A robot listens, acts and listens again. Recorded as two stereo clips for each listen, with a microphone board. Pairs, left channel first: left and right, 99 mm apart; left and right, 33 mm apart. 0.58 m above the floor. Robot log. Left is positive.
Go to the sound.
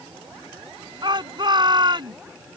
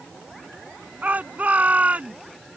note: The shout: about 45° right or 135° right.
cmd yaw -45
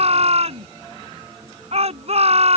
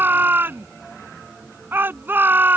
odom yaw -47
note: So it is at 90° right.
cmd yaw -90
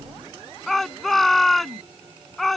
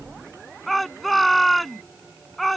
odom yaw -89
cmd fwd 1.0
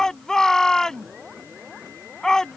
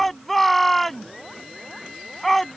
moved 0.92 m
cmd fwd 1.0
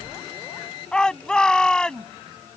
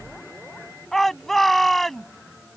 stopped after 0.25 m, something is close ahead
end: Blocked. The shout is further on, straight ahead.